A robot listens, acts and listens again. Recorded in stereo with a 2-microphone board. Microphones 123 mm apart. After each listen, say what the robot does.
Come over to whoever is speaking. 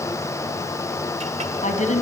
Turn 70° left.
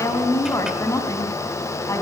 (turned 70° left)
Turn 25° left.
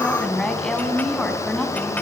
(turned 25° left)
Drive 1.0 m forward.
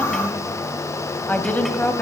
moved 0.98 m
Turn 15° left.
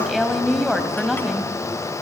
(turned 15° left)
Drive 1.0 m forward.
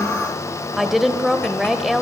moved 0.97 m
Drive 1.0 m forward.
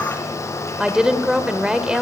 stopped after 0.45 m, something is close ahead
Turn 10° right.
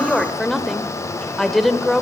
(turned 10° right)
Arrived at the woman speaking, straight ahead.